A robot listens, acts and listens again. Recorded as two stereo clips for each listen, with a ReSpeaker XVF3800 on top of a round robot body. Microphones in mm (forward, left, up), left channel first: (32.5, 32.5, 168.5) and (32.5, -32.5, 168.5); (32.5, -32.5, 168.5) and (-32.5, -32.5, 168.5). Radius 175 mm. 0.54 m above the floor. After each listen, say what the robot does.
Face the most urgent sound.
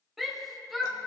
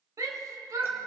Turn 175° right.
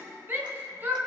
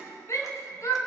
Turn 35° right.
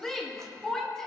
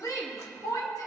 Turn 10° left.
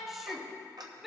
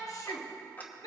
Found it: a shout, straight ahead, 1 to 2 m away.